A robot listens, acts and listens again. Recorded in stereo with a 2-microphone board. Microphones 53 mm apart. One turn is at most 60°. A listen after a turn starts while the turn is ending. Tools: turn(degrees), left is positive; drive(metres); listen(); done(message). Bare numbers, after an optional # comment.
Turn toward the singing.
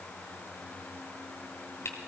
listen()
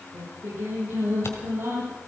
# The singing: about 60° right or 120° right.
turn(-60)
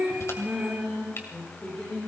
# So it is at 10° left.
turn(10)
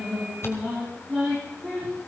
done("Facing the singing, over 4 m away.")